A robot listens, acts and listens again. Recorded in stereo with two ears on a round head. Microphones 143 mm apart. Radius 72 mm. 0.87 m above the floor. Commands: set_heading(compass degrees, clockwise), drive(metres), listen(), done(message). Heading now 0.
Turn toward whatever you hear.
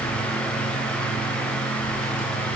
listen()
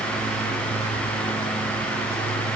listen()
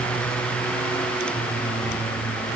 done("I can't make out anything.")